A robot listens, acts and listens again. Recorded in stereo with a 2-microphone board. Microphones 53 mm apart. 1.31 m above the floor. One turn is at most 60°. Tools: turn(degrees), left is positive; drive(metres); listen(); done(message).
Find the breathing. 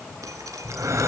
turn(degrees=-60)
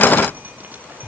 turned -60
done("Facing the breathing, 2 to 4 m away.")